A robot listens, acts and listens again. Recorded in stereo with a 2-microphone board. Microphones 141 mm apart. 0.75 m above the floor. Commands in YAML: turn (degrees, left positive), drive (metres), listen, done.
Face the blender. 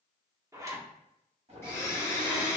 turn: 15
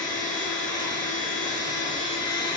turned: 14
turn: 150
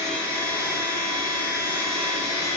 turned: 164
turn: -15
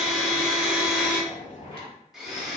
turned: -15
done: "Found it: a blender, straight ahead, under 1 m away."